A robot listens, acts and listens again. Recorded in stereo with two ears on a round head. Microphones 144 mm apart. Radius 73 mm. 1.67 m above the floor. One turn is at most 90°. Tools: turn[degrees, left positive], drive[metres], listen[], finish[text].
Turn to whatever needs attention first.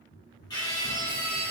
Thought: The scream: about 25° left or 155° left.
Action: turn[25]
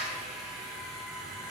Thought: So it is at 130° left.
Action: turn[90]
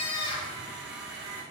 Thought: The scream is now 30° left.
Action: turn[30]
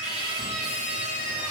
Action: finish[Facing the scream, 1 to 2 m away.]